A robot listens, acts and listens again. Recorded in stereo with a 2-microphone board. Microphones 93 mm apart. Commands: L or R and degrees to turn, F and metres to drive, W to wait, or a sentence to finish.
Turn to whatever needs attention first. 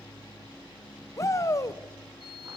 L35
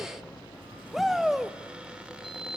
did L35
Found it: a shout, straight ahead, 1 to 2 m away.